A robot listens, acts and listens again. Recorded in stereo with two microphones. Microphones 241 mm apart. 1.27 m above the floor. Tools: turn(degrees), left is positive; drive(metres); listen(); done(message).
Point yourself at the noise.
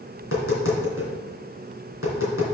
turn(degrees=65)
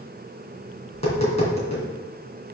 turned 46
turn(degrees=30)
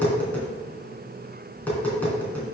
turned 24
done("Facing the tapping.")